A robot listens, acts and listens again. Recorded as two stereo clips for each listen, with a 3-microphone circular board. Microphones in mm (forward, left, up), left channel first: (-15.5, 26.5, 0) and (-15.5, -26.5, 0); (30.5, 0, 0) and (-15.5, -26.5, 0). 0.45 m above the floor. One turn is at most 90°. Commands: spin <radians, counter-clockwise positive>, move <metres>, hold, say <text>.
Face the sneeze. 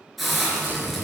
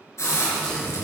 spin -0.79
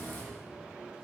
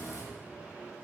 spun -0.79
say Facing where the sneeze came from. I can't hear it now.